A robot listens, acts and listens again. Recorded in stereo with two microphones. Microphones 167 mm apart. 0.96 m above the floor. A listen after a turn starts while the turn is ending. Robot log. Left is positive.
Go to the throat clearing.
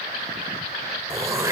note: The throat clearing: about 20° right or 160° right.
cmd yaw -20
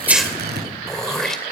cmd fwd 1.0
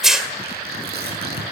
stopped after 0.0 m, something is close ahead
end: Blocked. The throat clearing is further on, straight ahead.